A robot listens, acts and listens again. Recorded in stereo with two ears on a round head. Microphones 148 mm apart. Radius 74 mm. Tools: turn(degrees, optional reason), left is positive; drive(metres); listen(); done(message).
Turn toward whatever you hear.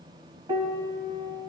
turn(degrees=-30, reason="The piano: about 30° right or 150° right.")
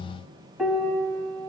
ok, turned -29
done("Found it: a piano, straight ahead.")